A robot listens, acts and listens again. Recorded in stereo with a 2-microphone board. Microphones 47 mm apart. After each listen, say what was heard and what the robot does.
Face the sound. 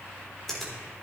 Turn 30° left.
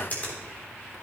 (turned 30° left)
So it is at 145° left. Turn 145° left.
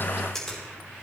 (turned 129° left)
The finger snap is now 15° left. Turn 15° left.
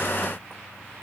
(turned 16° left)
Keep listening.
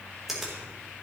Facing the finger snap.